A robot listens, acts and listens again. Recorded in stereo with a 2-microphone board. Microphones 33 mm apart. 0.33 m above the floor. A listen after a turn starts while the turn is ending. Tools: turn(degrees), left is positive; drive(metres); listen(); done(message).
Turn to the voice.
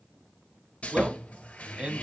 turn(degrees=-35)
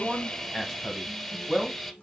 done("Found it: a man speaking, straight ahead, 1 to 2 m away.")